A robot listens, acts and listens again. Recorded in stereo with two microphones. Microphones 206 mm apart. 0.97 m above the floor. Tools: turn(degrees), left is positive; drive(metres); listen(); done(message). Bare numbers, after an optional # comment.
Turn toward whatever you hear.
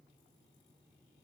listen()
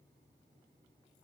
listen()
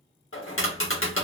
turn(90)
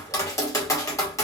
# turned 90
# So it is at 15° left.
turn(15)
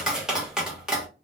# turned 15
done("Found it: tapping, straight ahead.")